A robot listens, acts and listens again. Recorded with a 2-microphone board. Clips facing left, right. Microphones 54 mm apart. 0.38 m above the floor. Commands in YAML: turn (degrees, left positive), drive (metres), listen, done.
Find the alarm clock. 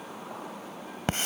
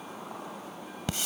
listen: true
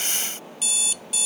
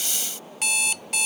turn: -65
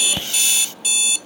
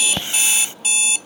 turn: -35
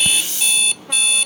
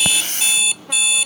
done: "Facing the alarm clock."